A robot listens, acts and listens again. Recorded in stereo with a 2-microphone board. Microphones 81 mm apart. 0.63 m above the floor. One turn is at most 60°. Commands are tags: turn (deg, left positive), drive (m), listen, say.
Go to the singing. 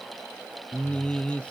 <turn deg="30"/>
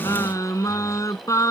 <turn deg="60"/>
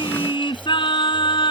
<turn deg="60"/>
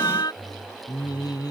<turn deg="50"/>
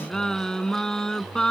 <drive m="1.0"/>
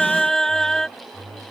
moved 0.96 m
<drive m="1.0"/>
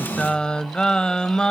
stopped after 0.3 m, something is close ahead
<turn deg="10"/>
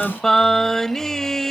<say>Arrived at the singing, straight ahead.</say>